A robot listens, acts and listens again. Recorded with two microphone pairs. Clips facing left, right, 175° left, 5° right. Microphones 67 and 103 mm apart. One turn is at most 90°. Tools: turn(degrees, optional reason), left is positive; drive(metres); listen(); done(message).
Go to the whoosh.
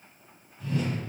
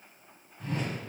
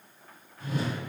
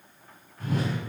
turn(degrees=-45, reason="The whoosh: 45° right.")
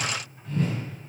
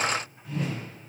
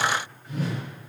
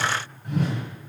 drive(metres=1.0)
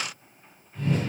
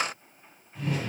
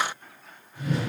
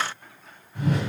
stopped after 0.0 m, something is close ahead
done("Something is in my way. I am facing the whoosh but have not reached it.")